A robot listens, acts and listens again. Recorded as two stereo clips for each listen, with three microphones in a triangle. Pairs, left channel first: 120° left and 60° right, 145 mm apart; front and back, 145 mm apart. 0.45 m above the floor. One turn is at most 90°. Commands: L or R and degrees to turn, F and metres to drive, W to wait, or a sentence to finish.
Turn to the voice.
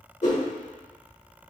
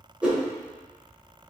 W
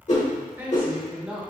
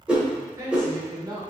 R90
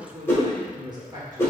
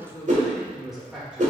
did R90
R90
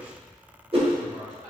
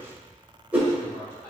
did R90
R70
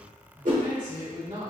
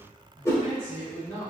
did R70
R40
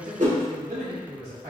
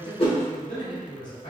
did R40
R10
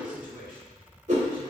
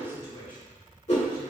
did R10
Found it: a man speaking, straight ahead, 1 to 2 m away.